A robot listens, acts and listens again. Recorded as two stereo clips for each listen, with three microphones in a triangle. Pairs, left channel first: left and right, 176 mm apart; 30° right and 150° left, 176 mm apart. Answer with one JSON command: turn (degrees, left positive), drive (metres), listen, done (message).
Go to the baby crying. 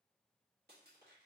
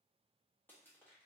{"listen": true}
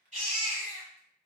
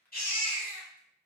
{"turn": -50}
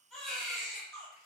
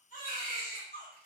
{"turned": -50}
{"drive": 1.0}
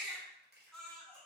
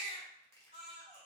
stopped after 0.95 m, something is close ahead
{"done": "I am next to the baby crying."}